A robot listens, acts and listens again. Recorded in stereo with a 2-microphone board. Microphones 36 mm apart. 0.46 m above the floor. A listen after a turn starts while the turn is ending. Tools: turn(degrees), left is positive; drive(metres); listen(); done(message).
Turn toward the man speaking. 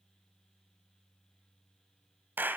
listen()
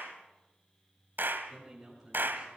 turn(degrees=-30)
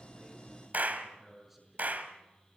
done("Facing the man speaking, over 4 m away.")